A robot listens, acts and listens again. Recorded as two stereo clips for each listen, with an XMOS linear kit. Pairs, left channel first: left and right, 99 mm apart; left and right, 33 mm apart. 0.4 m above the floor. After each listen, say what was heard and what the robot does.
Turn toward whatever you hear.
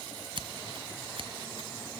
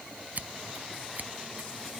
The scissors: about 65° right or 115° right. Turn 65° right.
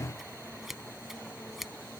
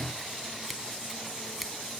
Found it: scissors, straight ahead.